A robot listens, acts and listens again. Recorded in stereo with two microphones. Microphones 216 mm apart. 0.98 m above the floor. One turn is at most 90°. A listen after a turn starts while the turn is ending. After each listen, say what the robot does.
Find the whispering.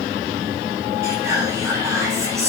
Turn 30° right.
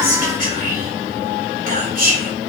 Turn 90° right.
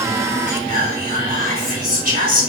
Turn 45° right.
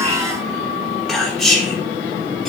Found it: whispering, straight ahead, 2 to 4 m away.